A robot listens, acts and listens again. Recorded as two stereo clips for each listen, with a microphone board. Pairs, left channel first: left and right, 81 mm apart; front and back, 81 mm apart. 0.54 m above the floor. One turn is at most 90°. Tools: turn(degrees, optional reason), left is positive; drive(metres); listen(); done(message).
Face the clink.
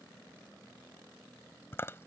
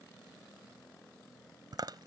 listen()
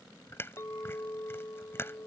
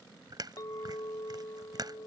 turn(degrees=40, reason="The clink: 40° left.")
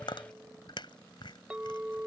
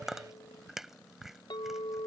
turn(degrees=-15, reason="The clink is now 15° right.")
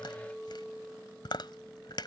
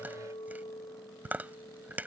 done("Facing the clink.")